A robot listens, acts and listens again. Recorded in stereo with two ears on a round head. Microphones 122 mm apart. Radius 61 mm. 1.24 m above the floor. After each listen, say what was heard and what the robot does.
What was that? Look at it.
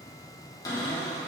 The cupboard door: about 30° left or 150° left. Turn 30° left.
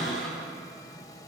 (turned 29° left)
Found it: a cupboard door, straight ahead, 1 to 2 m away.